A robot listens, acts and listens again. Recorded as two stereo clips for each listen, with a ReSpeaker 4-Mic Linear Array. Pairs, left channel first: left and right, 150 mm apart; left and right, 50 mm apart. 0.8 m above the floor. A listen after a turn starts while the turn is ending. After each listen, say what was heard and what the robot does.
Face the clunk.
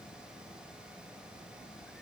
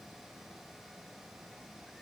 Keep listening.
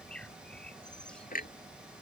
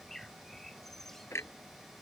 The clunk: about 65° left or 115° left. Turn 65° left.
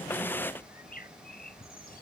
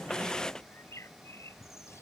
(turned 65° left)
Keep listening.
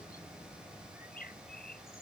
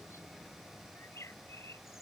I heard a clunk, but can't make it out now. It was about straight ahead or 50° left.